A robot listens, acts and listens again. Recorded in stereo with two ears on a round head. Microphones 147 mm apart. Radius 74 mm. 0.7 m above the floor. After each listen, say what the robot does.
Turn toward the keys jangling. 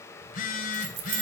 Turn 50° right.
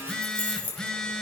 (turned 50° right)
Turn 10° left.
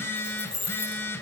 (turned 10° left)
Turn 10° left.
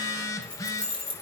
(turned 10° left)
Turn 10° left.
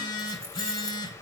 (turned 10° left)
Keep listening.
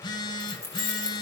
Found it: keys jangling, straight ahead, over 4 m away.